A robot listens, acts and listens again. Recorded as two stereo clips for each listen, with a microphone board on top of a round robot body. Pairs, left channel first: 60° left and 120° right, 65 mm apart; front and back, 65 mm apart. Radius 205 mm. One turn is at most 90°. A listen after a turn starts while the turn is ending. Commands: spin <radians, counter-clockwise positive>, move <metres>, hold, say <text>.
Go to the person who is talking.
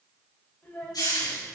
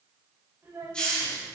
spin 1.57
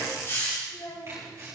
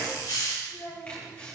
spin 0.61
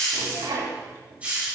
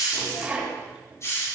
hold
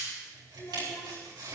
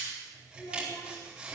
move 1.0
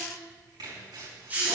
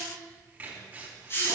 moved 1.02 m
hold
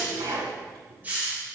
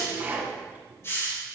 hold
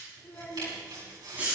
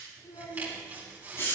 move 1.0
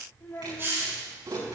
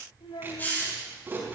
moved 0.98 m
move 1.0
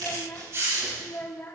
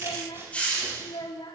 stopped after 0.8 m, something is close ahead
say Arrived at the child speaking, straight ahead.